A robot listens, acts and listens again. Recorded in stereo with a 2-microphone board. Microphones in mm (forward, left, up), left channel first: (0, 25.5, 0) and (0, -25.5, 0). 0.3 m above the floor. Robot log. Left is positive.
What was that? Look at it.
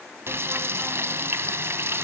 note: The frying: about 50° right or 130° right.
cmd yaw -50
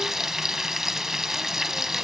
end: Facing the frying.